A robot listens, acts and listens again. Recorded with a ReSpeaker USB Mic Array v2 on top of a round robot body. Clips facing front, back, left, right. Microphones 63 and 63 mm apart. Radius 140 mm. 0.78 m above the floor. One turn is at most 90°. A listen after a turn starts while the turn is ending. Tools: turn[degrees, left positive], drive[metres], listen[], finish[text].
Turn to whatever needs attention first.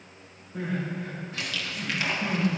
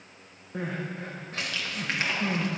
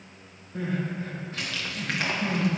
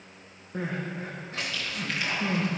Thought: The crying: 140° right.
Action: turn[-90]
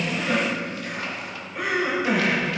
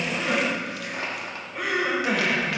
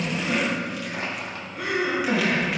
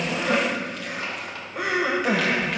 Thought: The crying is now 90° right.
Action: turn[-90]
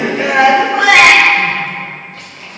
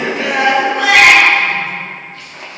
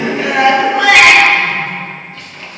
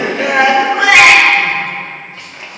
Thought: The crying is now 25° right.
Action: turn[-25]
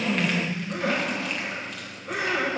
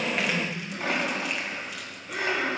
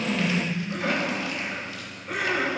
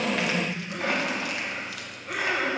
Action: finish[Facing the crying.]